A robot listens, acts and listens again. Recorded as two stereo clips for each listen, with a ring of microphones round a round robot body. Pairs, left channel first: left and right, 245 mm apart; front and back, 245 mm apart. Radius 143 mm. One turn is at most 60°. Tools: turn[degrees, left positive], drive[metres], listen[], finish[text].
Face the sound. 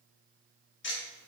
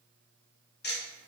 Thought: The ticking: 50° left.
Action: turn[50]
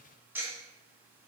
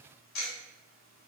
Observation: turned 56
Thought: The ticking is now 10° right.
Action: turn[-10]
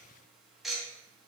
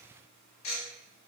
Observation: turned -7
Action: finish[Facing the ticking.]